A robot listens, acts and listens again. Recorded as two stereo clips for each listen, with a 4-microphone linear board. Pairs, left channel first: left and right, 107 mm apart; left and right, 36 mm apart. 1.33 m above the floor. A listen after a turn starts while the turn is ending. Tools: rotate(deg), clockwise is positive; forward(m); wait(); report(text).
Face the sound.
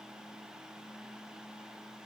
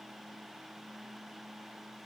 wait()
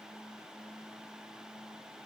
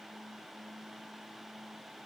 wait()
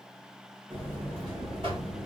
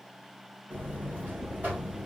rotate(55)
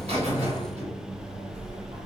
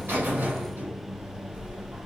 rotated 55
rotate(70)
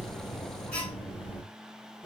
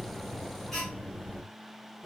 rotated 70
rotate(-15)
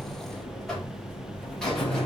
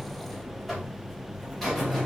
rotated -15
report("Facing the buzzer, 1 to 2 m away.")